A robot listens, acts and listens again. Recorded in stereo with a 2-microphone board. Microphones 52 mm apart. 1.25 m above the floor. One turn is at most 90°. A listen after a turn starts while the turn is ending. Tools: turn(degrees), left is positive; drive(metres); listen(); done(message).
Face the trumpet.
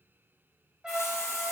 turn(degrees=-20)
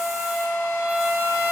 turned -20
turn(degrees=-90)
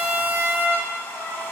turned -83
turn(degrees=-55)
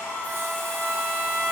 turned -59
done("Found it: a trumpet, straight ahead.")